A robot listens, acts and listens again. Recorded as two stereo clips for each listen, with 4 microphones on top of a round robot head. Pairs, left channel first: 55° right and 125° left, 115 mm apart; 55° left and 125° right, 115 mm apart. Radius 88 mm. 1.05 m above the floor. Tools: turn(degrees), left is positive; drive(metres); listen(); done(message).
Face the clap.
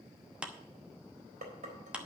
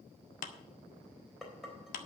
turn(degrees=45)
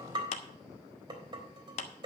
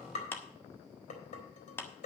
turn(degrees=-20)
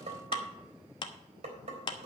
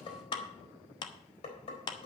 done("Found it: a clap, straight ahead.")